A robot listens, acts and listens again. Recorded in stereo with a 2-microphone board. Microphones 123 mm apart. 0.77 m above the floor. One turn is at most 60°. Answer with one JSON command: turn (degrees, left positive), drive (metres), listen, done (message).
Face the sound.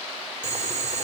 {"turn": -60}
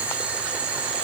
{"turn": -10}
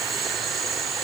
{"done": "Facing the boiling."}